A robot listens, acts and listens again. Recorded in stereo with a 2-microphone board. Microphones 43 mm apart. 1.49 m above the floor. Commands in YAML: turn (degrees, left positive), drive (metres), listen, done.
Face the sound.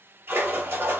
turn: -65
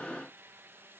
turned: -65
listen: true
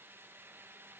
done: "I heard a splash, but can't make it out now. It was about straight ahead or 50° right."